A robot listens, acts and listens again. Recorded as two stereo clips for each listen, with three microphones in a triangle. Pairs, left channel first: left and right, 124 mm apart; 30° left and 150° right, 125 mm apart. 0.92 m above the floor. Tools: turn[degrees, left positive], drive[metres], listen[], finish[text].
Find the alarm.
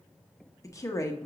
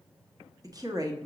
Action: listen[]
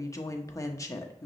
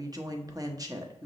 Action: listen[]
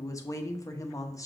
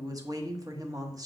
Action: finish[I can't make out an alarm to turn to.]